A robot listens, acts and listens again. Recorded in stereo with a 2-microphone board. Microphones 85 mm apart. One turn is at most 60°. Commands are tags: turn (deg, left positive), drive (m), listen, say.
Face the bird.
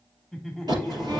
<turn deg="-50"/>
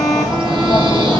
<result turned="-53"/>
<turn deg="-60"/>
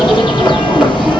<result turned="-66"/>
<turn deg="-10"/>
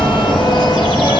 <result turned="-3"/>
<say>Facing the bird, over 4 m away.</say>